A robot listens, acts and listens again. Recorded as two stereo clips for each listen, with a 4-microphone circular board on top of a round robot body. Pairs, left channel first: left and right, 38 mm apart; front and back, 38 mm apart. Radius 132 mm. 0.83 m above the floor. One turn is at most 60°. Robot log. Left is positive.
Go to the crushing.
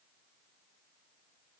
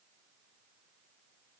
cmd idle
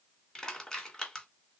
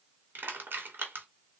note: The crushing: 160° left.
cmd yaw +60
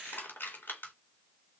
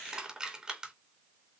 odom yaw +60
note: The crushing is now 110° left.
cmd yaw +60
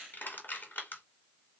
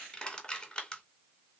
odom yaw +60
note: The crushing is now 65° left.
cmd yaw +60
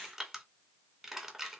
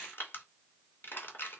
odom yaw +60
note: The crushing is now 15° right.
cmd yaw -15
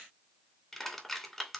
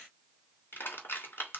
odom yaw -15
cmd fwd 1.0
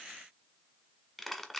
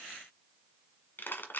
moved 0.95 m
cmd fwd 1.0
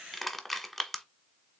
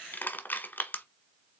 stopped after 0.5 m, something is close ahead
end: I am next to the crushing.